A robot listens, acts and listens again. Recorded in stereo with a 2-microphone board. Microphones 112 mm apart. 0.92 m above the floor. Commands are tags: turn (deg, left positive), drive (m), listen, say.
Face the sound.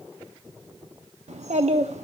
<turn deg="-90"/>
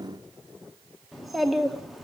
<say>Found it: a child speaking, straight ahead, under 1 m away.</say>